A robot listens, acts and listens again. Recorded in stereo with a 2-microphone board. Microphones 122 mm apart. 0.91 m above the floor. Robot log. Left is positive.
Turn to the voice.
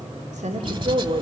note: The woman speaking: about 75° right or 105° right.
cmd yaw -75
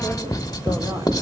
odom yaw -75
cmd idle
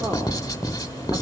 cmd idle
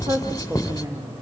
note: So it is at 25° right.
cmd yaw -25
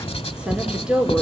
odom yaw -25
end: Found it: a woman speaking, straight ahead.